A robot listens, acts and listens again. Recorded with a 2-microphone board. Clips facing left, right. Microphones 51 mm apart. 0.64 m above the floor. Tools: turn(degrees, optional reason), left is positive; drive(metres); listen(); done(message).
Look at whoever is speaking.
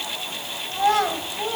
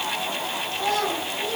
turn(degrees=40, reason="The child speaking: about 40° left or 140° left.")
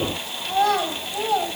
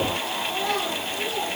turn(degrees=95, reason="So it is at 95° left.")
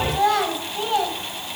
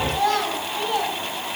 turn(degrees=15, reason="The child speaking is now 15° left.")
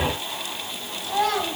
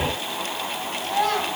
done("Found it: a child speaking, straight ahead, 1 to 2 m away.")